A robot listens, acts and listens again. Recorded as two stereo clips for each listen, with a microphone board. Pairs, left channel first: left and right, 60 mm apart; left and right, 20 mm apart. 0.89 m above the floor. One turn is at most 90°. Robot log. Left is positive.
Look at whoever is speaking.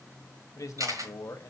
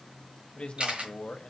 note: The man speaking: about 60° left or 120° left.
cmd yaw +60
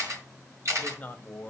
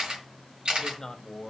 note: So it is at 30° left.
cmd yaw +30
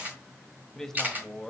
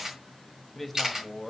end: Facing the man speaking.